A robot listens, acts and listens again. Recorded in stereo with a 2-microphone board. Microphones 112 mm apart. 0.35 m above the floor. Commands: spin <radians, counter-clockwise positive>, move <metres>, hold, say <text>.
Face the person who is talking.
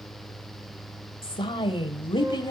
spin 0.70
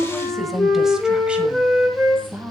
spin -0.35
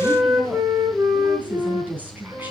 spin -0.26
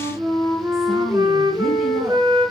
hold
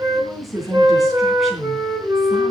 say Found it: a woman speaking, straight ahead, 2 to 4 m away.